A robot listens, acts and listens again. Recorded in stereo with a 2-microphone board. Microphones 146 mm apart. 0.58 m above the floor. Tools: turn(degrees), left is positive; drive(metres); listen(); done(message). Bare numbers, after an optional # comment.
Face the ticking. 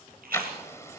# The ticking: about 20° left or 160° left.
turn(20)
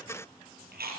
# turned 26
listen()
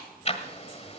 # So it is at 135° left.
turn(135)
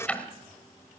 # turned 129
# The ticking is now 10° left.
turn(10)
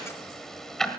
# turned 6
done("Facing the ticking.")